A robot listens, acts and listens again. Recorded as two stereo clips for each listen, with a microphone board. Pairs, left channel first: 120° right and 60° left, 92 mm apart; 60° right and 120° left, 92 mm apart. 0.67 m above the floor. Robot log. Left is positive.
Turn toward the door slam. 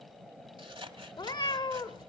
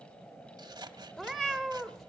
cmd idle
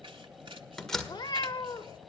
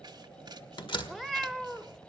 note: The door slam: 35° right.
cmd yaw -35
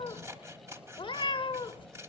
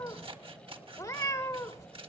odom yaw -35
end: Facing where the door slam came from. I can't hear it now.